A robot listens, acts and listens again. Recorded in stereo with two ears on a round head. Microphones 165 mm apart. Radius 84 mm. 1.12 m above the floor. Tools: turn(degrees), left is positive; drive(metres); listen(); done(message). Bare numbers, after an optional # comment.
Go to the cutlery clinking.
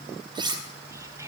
# The cutlery clinking: about 25° right or 155° right.
turn(-25)
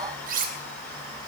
# So it is at 130° right.
turn(-130)
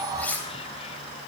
# The cutlery clinking is now 10° left.
turn(10)
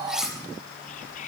drive(1.0)
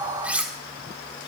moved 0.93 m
drive(1.0)
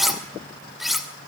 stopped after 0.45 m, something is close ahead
done("Arrived at the cutlery clinking, straight ahead.")